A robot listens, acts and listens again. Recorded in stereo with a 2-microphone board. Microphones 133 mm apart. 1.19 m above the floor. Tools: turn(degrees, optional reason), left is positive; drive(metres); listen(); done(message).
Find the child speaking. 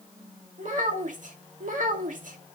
turn(degrees=-90)
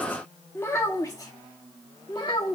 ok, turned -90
turn(degrees=40, reason="So it is at 40° left.")
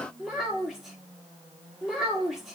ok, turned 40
done("Found it: a child speaking, straight ahead, 2 to 4 m away.")